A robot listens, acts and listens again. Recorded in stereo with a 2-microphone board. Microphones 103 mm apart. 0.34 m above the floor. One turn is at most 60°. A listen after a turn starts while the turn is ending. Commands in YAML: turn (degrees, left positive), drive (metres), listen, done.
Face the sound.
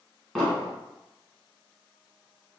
turn: 30
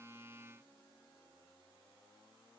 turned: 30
listen: true
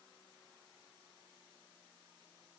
done: "I heard an explosion, but can't make it out now. It was about 25° right or 145° left."